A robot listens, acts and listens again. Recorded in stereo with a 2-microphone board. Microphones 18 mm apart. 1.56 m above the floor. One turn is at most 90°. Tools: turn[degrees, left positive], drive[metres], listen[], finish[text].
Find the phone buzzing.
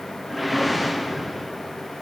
Action: listen[]
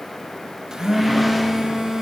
Thought: The phone buzzing: about 40° right or 140° right.
Action: turn[-40]
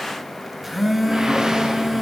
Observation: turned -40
Thought: So it is at 10° right.
Action: turn[-10]
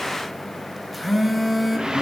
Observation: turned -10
Action: finish[Found it: a phone buzzing, straight ahead, under 1 m away.]